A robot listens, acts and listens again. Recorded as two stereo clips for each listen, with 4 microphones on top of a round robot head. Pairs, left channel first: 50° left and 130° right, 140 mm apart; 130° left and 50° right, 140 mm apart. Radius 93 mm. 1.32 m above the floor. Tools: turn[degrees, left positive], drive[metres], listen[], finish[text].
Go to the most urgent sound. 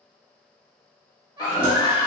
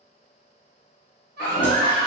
Thought: The baby crying: 75° right.
Action: turn[-75]
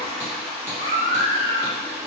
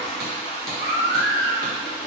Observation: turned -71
Action: drive[1.0]
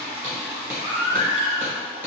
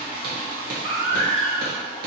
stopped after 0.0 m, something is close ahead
Action: finish[Something is in my way. I am facing the baby crying but have not reached it.]